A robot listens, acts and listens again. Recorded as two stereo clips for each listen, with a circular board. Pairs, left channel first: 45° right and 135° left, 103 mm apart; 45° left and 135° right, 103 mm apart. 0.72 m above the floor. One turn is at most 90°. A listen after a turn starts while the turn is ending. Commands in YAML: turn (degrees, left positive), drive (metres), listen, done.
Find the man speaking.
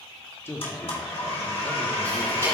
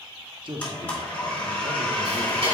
turn: -90
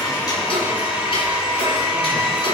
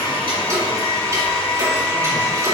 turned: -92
turn: -20
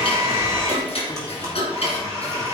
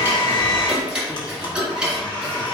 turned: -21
listen: true
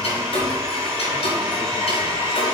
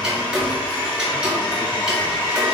done: "I heard a man speaking from this way, but can't make it out now."